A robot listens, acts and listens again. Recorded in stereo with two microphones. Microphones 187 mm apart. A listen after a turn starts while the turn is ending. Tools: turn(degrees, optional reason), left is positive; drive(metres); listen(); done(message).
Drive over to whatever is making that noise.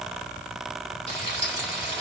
turn(degrees=30, reason="The frying: about 30° left or 150° left.")
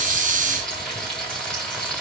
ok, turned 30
drive(metres=1.0)
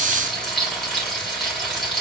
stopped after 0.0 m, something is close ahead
done("Blocked. The frying is further on, straight ahead.")